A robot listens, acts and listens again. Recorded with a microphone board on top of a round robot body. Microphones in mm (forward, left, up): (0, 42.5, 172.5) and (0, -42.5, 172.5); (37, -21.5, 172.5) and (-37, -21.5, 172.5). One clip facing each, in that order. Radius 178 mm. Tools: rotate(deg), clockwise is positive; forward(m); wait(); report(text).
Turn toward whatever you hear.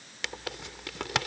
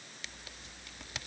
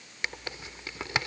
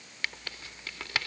rotate(-70)
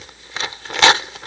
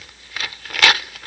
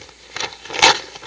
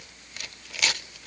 rotate(-25)
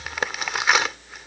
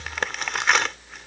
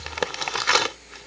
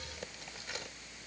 report("Facing the tearing paper.")